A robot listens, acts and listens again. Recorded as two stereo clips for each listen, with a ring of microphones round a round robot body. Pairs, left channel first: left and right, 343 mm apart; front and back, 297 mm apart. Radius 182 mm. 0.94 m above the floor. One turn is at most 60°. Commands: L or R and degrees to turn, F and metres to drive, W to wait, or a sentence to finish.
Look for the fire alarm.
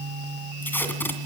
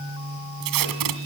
W
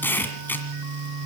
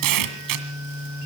W
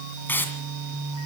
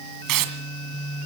I can't make out a fire alarm, only tape being pulled.